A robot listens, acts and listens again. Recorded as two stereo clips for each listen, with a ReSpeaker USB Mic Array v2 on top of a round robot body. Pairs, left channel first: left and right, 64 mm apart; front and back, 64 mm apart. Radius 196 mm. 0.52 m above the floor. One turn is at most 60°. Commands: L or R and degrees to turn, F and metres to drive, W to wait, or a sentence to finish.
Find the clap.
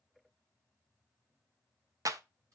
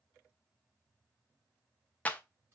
R60
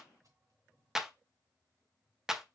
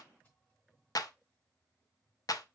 R10
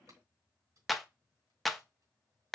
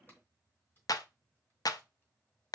Found it: a clap, straight ahead, under 1 m away.